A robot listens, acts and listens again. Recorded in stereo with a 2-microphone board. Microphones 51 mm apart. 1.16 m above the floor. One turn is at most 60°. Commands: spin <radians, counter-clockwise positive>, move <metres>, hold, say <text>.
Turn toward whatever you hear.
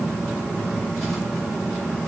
hold
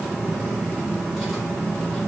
hold
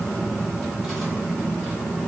say I can't make out anything.